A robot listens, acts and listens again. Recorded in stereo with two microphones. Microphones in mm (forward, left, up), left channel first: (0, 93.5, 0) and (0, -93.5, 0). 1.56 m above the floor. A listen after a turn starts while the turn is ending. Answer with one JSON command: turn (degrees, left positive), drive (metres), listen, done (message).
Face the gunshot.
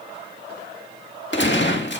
{"turn": 90}
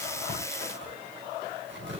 {"done": "Facing where the gunshot came from. I can't hear it now."}